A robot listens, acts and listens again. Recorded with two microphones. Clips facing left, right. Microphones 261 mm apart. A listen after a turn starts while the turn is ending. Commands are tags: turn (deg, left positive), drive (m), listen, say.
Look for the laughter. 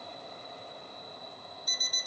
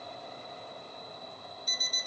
<listen/>
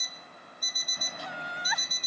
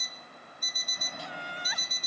<turn deg="70"/>
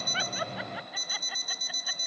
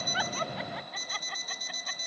<listen/>
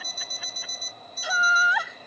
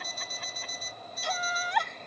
<say>Facing the laughter.</say>